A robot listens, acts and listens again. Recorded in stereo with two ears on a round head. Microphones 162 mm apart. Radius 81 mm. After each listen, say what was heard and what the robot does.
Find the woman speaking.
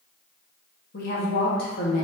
The woman speaking: about 55° left or 125° left. Turn 55° left.
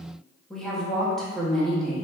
Found it: a woman speaking, straight ahead.